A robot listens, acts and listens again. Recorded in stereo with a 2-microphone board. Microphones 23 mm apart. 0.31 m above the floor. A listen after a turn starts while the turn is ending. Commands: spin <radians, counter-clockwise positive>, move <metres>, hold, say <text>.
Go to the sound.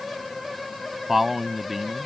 spin -0.35
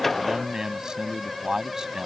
spin -2.36
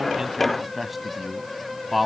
move 1.0
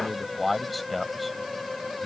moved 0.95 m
move 1.0
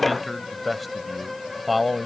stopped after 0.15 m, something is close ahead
say I am next to the man speaking.